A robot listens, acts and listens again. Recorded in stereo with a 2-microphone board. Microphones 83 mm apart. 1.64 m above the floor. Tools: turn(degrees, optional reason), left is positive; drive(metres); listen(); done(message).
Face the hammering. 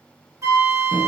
listen()
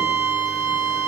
listen()
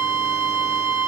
done("I can't make out hammering, only a flute.")